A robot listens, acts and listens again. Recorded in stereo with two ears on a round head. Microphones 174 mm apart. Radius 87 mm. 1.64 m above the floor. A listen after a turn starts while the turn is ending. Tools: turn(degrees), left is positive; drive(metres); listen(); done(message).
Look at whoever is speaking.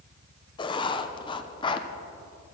listen()
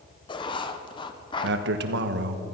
turn(degrees=-60)
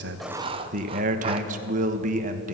turn(degrees=-45)
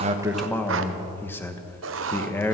turn(degrees=10)
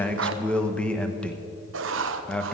done("Facing the man speaking.")